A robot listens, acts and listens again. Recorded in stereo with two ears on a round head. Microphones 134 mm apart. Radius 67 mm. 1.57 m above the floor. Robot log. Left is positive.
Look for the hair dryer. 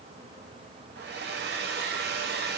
cmd yaw -90
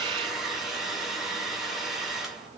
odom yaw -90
end: Found it: a hair dryer, straight ahead, under 1 m away.